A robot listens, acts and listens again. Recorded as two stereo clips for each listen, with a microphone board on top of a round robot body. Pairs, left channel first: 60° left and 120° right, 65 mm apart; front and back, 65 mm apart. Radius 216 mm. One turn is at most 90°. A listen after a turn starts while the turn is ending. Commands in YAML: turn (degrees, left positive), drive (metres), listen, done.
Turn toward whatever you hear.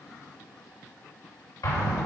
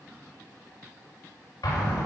turn: 30
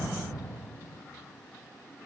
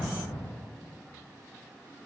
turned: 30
done: "Facing the explosion."